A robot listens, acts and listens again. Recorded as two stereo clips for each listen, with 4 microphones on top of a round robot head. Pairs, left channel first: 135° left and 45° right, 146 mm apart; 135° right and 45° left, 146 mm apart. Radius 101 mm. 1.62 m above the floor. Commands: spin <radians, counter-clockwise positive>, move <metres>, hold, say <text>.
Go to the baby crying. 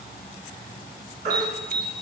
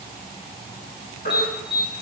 spin -1.48
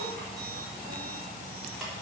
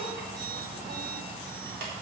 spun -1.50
hold
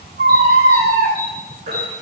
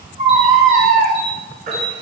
move 1.0
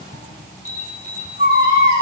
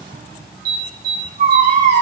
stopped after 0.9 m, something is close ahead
spin 0.26
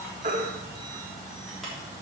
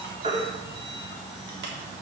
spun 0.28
say I am next to the baby crying.